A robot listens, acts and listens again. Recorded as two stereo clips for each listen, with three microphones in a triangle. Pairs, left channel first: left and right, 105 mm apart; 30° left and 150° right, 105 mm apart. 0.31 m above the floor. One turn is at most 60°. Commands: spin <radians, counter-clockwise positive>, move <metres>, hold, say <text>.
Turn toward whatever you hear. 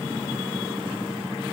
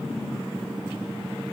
hold
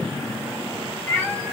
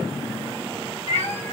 spin 0.44
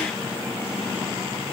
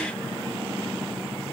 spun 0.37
hold
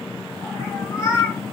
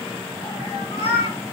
spin 0.61
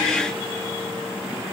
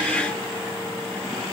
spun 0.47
spin 0.17
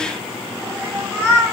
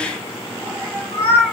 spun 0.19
say Facing the cat meowing, 1 to 2 m away.